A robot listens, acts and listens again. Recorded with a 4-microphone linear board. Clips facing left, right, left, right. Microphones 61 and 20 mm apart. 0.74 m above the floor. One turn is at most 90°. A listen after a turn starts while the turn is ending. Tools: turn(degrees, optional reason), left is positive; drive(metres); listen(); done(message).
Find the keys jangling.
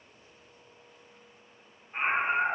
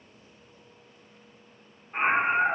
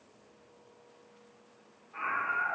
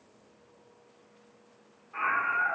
listen()
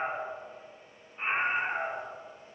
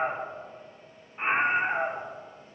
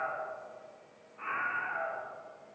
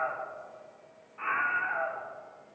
listen()
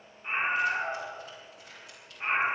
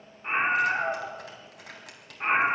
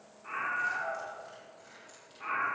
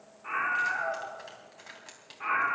turn(degrees=-90)
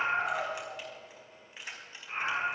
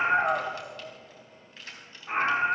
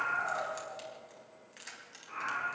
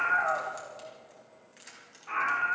turn(degrees=15, reason="So it is at 15° left.")
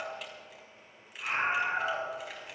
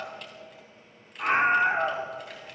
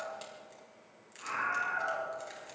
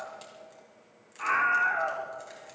listen()
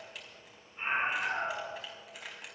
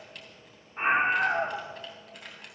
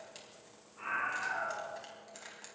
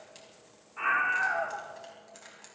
done("Found it: keys jangling, straight ahead, 2 to 4 m away.")